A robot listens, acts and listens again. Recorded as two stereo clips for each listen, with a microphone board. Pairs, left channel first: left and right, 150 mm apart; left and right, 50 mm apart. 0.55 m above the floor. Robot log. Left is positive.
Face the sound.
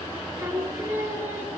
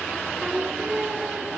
note: The singing: about 15° right or 165° right.
cmd yaw -15
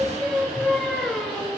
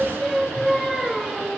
end: Facing the singing, over 4 m away.